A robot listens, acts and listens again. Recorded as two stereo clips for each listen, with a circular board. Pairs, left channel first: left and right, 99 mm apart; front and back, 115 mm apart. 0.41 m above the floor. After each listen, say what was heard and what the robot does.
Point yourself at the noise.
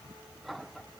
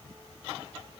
Keep listening.
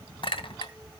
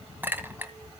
The clink: 110° left. Turn 110° left.
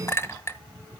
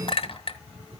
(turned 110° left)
The clink is now 30° left. Turn 30° left.
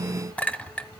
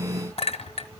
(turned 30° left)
The clink is now 15° left. Turn 15° left.
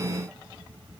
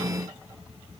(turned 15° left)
Keep listening.
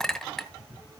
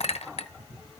Found it: a clink, straight ahead.